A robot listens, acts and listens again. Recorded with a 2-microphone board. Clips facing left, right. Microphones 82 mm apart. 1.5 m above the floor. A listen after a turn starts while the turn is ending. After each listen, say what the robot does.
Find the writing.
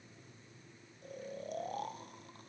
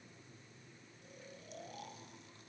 Keep listening.
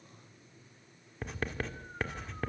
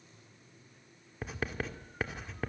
Turn 30° left.
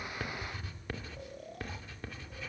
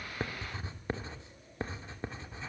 Turn 30° right.
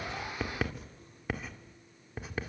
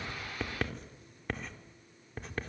Found it: writing, straight ahead.